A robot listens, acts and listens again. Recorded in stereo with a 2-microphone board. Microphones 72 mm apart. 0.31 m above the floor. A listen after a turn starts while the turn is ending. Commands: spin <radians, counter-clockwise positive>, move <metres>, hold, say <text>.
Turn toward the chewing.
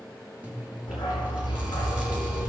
spin -0.35
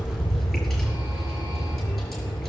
hold
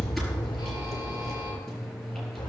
say Facing the chewing, over 4 m away.